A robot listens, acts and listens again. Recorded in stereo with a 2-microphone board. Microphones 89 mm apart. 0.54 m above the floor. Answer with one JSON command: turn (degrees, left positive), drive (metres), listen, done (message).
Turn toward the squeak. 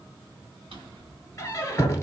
{"turn": 35}
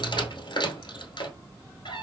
{"turn": 110}
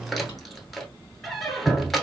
{"done": "Found it: a squeak, straight ahead, under 1 m away."}